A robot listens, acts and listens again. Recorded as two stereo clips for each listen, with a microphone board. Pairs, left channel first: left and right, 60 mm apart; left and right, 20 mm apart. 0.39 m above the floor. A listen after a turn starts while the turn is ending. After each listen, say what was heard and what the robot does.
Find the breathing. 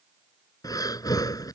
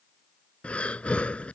The breathing: about 70° left or 110° left. Turn 70° left.
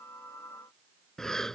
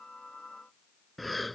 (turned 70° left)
Found it: breathing, straight ahead.